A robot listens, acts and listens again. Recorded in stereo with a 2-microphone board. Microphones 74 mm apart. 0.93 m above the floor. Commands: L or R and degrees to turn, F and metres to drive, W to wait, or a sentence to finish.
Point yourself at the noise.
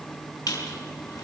L50
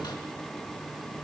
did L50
L85
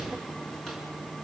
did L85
W
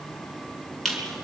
Found it: a squeak, straight ahead.